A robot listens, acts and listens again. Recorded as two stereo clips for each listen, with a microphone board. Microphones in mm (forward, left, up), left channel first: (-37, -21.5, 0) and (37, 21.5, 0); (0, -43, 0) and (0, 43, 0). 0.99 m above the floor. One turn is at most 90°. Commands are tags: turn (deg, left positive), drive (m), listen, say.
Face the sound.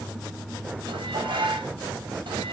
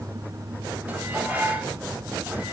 <turn deg="15"/>
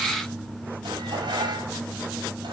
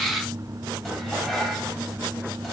<say>Found it: dishes clattering, straight ahead, 2 to 4 m away.</say>